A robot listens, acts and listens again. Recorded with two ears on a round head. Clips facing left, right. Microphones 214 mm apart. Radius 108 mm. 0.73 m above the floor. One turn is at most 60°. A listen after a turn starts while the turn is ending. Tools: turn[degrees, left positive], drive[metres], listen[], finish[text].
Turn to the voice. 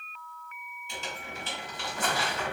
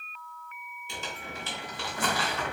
Action: listen[]
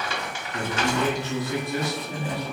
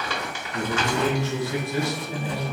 Thought: The man speaking: about 15° left or 165° left.
Action: turn[15]
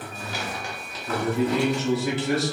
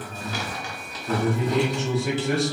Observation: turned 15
Action: finish[Found it: a man speaking, straight ahead.]